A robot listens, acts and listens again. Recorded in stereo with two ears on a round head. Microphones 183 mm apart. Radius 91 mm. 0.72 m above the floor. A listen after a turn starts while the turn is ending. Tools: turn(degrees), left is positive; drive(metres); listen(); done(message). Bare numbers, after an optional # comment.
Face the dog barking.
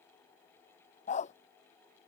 # The dog barking: about 35° left or 145° left.
turn(35)
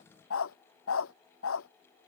# So it is at 105° left.
turn(105)
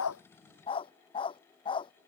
# The dog barking is now 25° left.
turn(25)
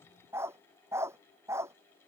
# The dog barking is now 15° right.
turn(-15)
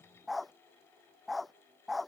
done("Found it: a dog barking, straight ahead.")